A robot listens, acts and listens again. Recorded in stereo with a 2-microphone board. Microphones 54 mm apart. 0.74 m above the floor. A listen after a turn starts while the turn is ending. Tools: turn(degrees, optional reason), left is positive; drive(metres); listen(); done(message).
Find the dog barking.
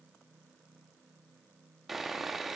listen()
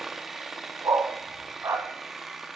turn(degrees=-60, reason="The dog barking: about 60° right or 120° right.")
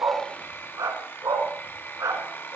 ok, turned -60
turn(degrees=-85, reason="So it is at 85° right.")
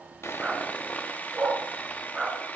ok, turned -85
done("Found it: a dog barking, straight ahead, 2 to 4 m away.")